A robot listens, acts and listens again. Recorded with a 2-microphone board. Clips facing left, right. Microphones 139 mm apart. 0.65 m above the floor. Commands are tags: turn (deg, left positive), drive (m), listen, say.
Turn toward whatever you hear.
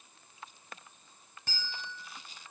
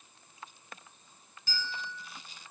<turn deg="65"/>
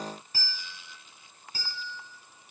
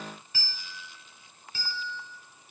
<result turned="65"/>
<turn deg="45"/>
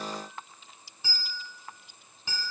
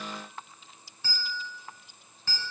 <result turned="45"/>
<turn deg="15"/>
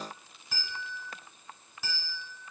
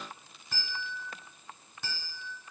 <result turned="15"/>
<say>Found it: a bell, straight ahead.</say>